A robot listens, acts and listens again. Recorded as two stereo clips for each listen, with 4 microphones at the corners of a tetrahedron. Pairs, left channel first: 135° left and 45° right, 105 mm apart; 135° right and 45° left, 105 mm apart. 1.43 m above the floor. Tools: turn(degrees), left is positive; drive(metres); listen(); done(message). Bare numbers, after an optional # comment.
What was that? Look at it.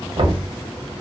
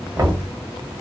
# The knocking: 10° right.
turn(-10)
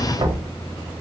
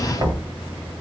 done("Facing the knocking.")